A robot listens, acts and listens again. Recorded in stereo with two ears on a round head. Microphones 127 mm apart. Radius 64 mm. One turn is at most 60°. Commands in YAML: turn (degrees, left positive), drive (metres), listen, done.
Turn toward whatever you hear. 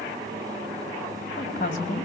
turn: 60
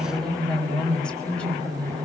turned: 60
turn: 10
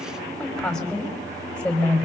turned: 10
turn: 10
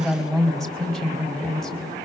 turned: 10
done: "Facing the woman speaking, over 4 m away."